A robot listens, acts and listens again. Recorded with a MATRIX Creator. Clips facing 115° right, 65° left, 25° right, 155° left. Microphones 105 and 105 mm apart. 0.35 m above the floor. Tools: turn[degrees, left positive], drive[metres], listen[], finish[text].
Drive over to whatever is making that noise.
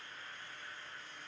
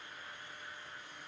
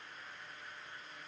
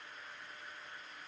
Action: listen[]
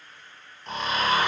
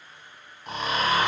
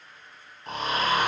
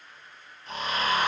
Thought: The snoring: 10° right.
Action: turn[-10]
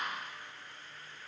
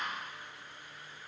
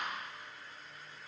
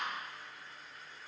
Action: listen[]
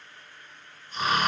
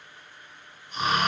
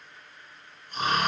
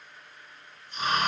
Action: drive[1.0]
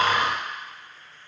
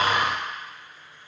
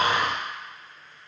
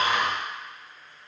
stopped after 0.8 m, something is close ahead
Action: finish[I am next to the snoring.]